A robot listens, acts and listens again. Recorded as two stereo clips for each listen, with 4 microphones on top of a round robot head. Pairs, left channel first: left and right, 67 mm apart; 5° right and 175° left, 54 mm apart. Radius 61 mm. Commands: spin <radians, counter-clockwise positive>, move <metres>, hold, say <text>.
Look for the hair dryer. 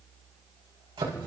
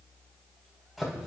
hold
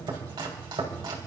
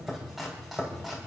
hold
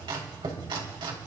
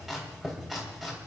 say I can't make out a hair dryer to turn to.